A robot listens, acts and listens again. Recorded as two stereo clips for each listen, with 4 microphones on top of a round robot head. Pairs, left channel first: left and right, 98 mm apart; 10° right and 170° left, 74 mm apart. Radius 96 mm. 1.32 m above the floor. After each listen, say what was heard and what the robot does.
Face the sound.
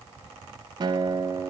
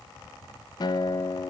The guitar: 40° right. Turn 40° right.
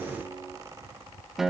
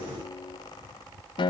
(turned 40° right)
Found it: a guitar, straight ahead, 1 to 2 m away.